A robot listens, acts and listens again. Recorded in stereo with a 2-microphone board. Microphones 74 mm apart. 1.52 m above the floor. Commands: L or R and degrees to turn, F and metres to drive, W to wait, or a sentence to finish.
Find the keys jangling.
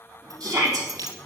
R60
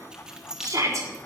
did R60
R10
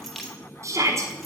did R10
Facing the keys jangling.